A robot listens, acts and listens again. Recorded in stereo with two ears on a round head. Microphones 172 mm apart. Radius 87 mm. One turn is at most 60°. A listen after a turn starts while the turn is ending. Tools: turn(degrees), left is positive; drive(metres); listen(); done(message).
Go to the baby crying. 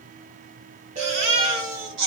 turn(degrees=-60)
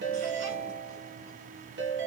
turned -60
listen()
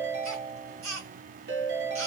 turn(degrees=-40)
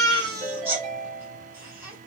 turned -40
turn(degrees=-15)
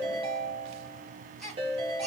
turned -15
drive(metres=1.0)
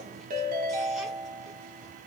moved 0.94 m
listen()
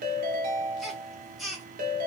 drive(metres=1.0)
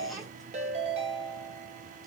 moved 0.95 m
listen()
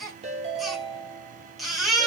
drive(metres=1.0)
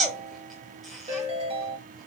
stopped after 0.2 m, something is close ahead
done("I am next to the baby crying.")